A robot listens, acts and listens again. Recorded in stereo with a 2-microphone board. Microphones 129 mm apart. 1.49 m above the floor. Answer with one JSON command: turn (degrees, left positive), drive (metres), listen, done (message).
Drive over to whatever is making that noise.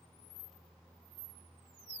{"listen": true}
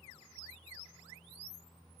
{"listen": true}
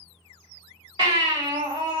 {"turn": -40}
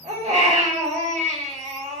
{"turn": -100}
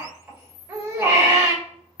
{"turn": -15}
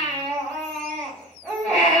{"drive": 1.0}
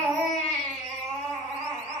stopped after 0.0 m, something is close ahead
{"done": "Something is in my way. I am facing the baby crying but have not reached it."}